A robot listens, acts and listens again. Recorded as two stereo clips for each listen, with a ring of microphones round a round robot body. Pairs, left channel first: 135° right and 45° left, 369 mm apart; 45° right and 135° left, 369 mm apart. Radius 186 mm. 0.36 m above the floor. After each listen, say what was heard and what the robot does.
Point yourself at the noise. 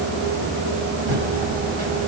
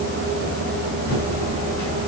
The typing on a keyboard: 60° left. Turn 60° left.
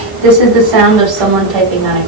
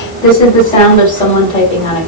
The typing on a keyboard is now 30° left. Turn 30° left.
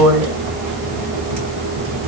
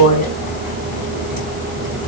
The typing on a keyboard is now 20° left. Turn 20° left.
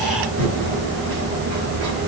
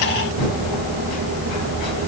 Found it: typing on a keyboard, straight ahead, 2 to 4 m away.